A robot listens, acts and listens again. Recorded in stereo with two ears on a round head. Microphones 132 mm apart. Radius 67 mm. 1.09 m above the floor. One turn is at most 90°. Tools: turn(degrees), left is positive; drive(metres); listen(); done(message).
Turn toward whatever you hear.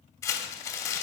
turn(degrees=25)
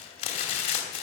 turn(degrees=90)
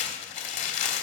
turn(degrees=55)
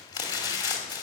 turn(degrees=30)
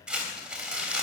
done("Facing the crumpling, 2 to 4 m away.")